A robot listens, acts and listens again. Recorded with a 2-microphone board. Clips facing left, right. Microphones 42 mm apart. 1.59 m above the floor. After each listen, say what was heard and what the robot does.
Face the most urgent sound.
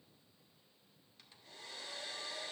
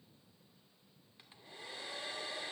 Keep listening.
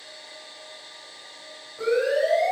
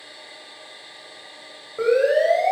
The siren: about 60° right or 120° right. Turn 60° right.
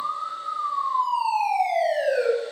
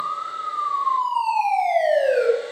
So it is at 65° right. Turn 65° right.
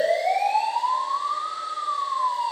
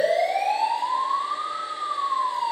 Found it: a siren, straight ahead, over 4 m away.